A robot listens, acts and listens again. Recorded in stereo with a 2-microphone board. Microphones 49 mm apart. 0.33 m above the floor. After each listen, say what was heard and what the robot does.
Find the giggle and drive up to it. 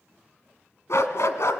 Keep listening.
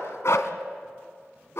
Keep listening.
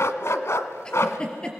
The giggle: about 20° left or 160° left. Turn 20° left.
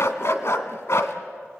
Keep listening.
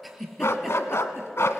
Drive 1.0 m forward.
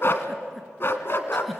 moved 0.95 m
Drive 1.0 m forward.
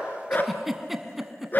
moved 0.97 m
Drive 1.0 m forward.
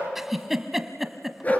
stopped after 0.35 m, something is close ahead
I am next to the giggle.